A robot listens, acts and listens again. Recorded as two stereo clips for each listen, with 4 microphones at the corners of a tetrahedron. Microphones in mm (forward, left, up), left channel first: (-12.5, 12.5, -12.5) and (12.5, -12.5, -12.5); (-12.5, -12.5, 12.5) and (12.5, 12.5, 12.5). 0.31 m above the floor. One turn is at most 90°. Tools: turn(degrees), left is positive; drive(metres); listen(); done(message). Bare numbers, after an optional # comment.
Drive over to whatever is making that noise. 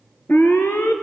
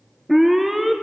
# The alarm: 130° left.
turn(90)
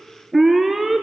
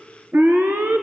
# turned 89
# The alarm is now 40° left.
turn(40)
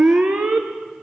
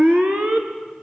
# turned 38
drive(1.0)
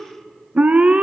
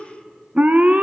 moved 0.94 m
drive(1.0)
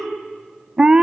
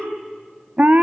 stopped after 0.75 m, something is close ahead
# The alarm is now 15° left.
turn(15)
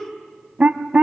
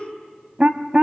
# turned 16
done("Arrived at the alarm, straight ahead.")